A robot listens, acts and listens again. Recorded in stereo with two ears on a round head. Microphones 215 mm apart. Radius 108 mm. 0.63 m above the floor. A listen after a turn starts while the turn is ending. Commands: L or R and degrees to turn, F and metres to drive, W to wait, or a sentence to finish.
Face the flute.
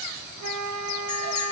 R90
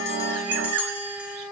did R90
Found it: a flute, straight ahead.